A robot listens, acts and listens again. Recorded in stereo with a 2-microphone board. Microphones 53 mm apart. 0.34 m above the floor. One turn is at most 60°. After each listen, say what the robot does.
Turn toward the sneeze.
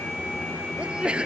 Turn 20° right.
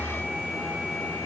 Keep listening.
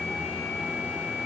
I heard a sneeze, but can't make it out now. It was about straight ahead or 140° right.